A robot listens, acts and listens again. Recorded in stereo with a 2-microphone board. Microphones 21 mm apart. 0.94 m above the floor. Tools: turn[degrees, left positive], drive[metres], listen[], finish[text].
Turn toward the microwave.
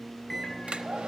Action: turn[30]
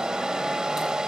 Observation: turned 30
Action: listen[]
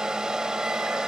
Action: listen[]
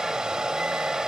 Action: finish[I heard a microwave, but can't make it out now. It was about 25° right or 145° left.]